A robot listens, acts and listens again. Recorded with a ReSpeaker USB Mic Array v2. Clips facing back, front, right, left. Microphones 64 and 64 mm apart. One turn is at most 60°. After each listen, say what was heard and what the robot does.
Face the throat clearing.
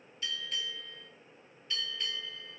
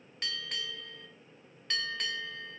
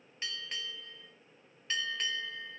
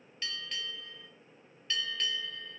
Keep listening.
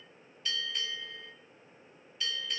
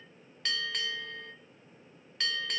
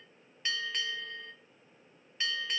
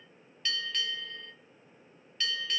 Keep listening.
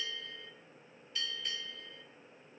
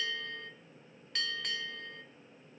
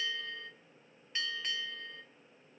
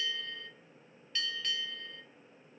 I can't make out throat clearing, only a bell.